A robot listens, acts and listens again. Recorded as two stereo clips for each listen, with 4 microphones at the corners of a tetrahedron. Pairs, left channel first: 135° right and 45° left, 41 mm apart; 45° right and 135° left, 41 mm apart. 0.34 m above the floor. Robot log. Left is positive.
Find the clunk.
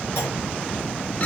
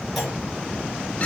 note: The clunk: 130° right.
cmd yaw -130
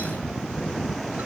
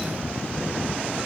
end: Facing where the clunk came from. I can't hear it now.